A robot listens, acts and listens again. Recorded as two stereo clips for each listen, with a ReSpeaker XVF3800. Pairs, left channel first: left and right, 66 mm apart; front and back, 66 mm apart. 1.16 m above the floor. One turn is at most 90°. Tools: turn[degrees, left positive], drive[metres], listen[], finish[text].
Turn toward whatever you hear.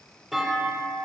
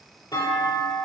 Action: finish[Facing the clunk, 2 to 4 m away.]